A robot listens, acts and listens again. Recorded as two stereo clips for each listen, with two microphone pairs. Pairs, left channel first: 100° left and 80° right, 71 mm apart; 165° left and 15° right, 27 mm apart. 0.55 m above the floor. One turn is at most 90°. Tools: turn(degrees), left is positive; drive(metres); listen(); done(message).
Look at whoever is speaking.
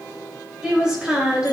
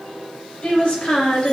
turn(degrees=-90)
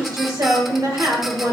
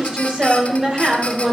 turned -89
turn(degrees=-75)
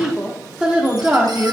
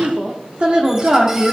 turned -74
turn(degrees=-25)
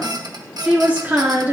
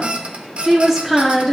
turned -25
turn(degrees=-90)
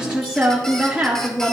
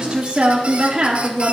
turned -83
turn(degrees=-15)
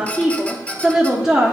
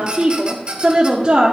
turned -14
done("Facing the woman speaking.")